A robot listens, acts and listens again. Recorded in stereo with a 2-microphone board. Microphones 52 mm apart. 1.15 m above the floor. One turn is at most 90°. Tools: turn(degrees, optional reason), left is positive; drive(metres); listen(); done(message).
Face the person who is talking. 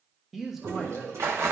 turn(degrees=-30)
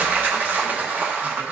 listen()
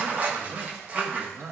turn(degrees=-90, reason="So it is at 150° right.")
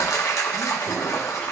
turn(degrees=-60, reason="Nothing new. It was at 60° right.")
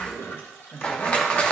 turn(degrees=40, reason="The man speaking is now 40° left.")
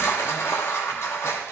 listen()
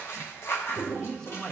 turn(degrees=10, reason="The man speaking is now 10° left.")
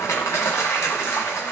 listen()
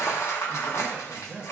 done("Facing the man speaking, 1 to 2 m away.")